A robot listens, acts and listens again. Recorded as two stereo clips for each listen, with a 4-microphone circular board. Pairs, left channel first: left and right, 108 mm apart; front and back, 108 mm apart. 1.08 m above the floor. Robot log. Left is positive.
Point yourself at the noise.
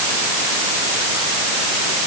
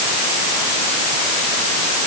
cmd idle
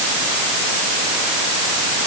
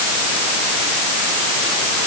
cmd idle
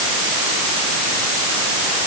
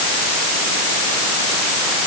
end: I can't make out anything to turn to.